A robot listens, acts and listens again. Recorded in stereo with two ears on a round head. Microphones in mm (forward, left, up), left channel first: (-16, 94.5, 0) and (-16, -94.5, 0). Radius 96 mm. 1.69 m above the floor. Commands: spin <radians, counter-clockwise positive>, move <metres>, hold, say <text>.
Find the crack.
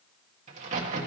spin -0.70
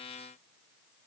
hold
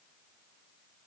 say I heard a crack, but can't make it out now. It was about straight ahead or 100° right.